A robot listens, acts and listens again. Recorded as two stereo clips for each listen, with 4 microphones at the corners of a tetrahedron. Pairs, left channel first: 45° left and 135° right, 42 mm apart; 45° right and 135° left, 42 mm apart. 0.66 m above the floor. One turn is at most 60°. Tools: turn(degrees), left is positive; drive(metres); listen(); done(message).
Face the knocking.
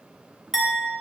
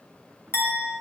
listen()
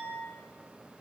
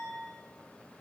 listen()
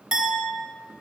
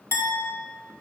done("I can't make out knocking to turn to.")